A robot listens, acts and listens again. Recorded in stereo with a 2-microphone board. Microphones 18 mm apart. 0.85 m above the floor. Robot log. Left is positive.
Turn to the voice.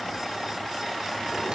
cmd idle
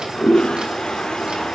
cmd idle
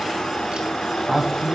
cmd yaw +30
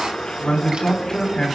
note: So it is at 150° left.
cmd yaw +150
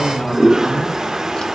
note: The man speaking is now 25° left.
cmd yaw +25
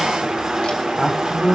end: Found it: a man speaking, straight ahead.